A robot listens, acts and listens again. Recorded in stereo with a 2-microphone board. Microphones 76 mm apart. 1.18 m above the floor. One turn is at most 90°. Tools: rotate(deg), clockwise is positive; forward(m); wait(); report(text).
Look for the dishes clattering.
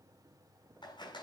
wait()
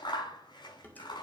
rotate(-25)
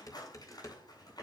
rotate(-90)
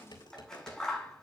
rotate(-75)
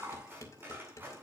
rotate(-40)
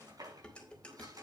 rotate(-15)
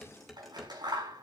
report("Facing the dishes clattering.")